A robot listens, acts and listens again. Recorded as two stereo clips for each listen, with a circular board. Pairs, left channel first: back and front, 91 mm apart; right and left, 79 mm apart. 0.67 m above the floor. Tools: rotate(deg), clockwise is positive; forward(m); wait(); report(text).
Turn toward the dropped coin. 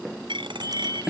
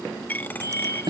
rotate(25)
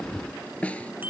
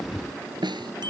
report("I heard a dropped coin from this way, but can't make it out now.")